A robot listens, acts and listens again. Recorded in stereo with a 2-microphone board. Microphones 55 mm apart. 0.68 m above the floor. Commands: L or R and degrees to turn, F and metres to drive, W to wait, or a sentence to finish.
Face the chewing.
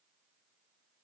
W
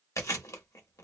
L70
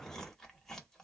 L10
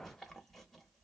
Facing the chewing.